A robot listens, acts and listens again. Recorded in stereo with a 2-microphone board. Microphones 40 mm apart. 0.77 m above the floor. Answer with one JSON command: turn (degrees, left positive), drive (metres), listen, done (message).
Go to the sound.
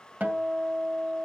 {"turn": -45}
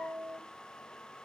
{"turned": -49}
{"turn": -85}
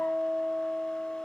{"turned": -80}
{"drive": 1.0}
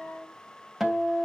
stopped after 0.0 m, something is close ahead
{"done": "Blocked. The guitar is further on, straight ahead."}